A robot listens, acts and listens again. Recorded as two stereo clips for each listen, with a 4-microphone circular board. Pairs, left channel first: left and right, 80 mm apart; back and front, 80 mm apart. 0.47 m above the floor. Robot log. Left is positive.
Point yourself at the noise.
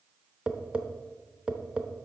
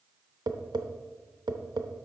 note: The tapping: 15° right.
cmd yaw -15
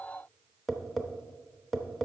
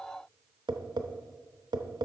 end: Facing the tapping.